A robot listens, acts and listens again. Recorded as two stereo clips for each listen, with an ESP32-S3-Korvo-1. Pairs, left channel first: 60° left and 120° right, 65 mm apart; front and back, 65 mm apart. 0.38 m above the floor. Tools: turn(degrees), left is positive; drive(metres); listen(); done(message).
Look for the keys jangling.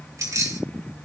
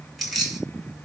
turn(degrees=-90)
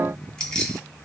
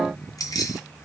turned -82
turn(degrees=-15)
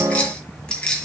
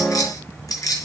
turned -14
turn(degrees=-15)
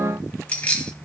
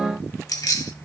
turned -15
turn(degrees=-10)
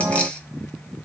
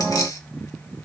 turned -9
listen()
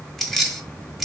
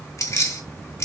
turn(degrees=-30)
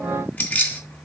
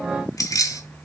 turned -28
done("Facing the keys jangling.")